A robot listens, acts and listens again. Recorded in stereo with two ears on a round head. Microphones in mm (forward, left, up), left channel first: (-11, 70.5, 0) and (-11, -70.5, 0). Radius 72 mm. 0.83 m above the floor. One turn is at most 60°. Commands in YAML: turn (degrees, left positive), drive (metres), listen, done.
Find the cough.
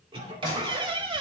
turn: -30
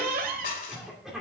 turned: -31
done: "Facing the cough."